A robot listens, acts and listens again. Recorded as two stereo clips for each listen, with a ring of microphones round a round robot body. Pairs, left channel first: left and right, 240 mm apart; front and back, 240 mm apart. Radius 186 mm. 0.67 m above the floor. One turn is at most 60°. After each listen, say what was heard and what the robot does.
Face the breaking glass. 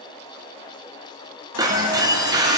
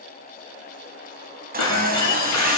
The breaking glass: 15° right. Turn 15° right.
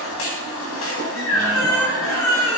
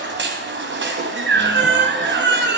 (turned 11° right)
Facing where the breaking glass came from. I can't hear it now.